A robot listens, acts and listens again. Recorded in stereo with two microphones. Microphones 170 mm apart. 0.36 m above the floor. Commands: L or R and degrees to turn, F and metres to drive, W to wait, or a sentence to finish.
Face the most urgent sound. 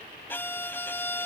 W
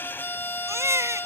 R15
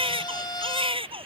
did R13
R150
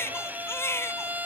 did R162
L15
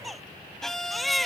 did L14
Facing the baby crying.